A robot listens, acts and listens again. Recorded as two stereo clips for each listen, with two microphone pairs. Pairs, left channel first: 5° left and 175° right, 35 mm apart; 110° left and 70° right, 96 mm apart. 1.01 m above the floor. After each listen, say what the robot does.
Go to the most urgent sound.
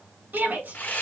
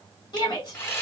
Turn 150° left.
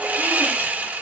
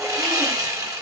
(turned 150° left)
Keep listening.
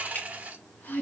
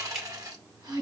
Turn 20° right.
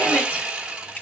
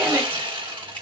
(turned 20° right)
Keep listening.
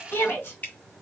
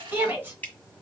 Drive 1.0 m forward.
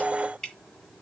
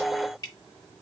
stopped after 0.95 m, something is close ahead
Keep listening.
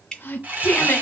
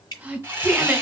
I am next to the shout.